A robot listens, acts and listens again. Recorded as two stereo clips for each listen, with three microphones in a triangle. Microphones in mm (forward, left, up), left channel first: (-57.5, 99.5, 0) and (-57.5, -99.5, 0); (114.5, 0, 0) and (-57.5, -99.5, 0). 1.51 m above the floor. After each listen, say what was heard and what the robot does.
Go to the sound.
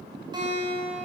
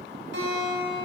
The guitar: 155° right. Turn 155° right.
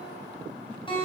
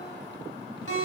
The guitar is now 25° left. Turn 25° left.
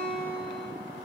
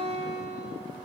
Drive 1.0 m forward.
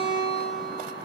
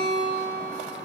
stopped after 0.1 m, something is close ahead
Something is in my way. I am facing the guitar but have not reached it.